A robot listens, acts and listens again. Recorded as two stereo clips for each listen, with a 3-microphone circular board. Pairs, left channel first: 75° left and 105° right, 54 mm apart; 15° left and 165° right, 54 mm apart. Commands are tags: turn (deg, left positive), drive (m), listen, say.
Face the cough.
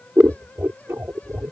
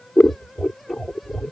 <listen/>
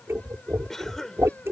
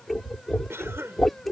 <turn deg="160"/>
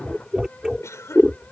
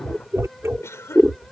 <turn deg="45"/>
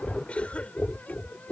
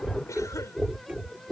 <turn deg="10"/>
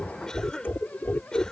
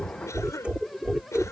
<say>Found it: a cough, straight ahead.</say>